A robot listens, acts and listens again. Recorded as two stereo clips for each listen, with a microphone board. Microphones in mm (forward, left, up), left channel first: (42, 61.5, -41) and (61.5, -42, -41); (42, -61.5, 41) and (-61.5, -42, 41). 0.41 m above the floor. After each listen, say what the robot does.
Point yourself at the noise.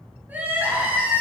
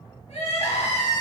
Facing the crying, over 4 m away.